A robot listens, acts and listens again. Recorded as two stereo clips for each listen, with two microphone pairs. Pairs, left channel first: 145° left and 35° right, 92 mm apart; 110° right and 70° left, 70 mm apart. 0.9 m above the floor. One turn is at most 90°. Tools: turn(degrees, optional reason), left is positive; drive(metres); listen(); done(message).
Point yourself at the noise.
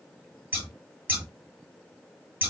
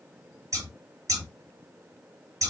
turn(degrees=35, reason="The scissors: 35° left.")
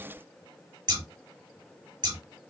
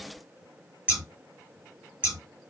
done("Facing the scissors.")